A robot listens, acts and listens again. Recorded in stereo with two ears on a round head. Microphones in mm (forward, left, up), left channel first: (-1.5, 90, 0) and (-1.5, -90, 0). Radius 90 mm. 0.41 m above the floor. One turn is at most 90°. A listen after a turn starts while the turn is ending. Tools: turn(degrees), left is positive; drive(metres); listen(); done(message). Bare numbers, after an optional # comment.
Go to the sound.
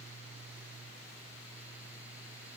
listen()
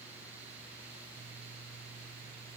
listen()
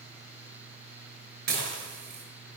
# The dishes clattering: about 50° right or 130° right.
turn(-50)
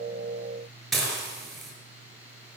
drive(1.0)
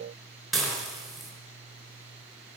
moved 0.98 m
drive(1.0)
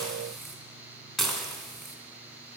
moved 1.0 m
drive(1.0)
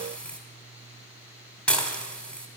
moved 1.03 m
drive(1.0)
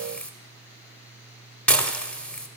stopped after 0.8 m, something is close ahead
# The dishes clattering is now 10° left.
turn(10)
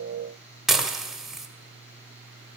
done("I am next to the dishes clattering.")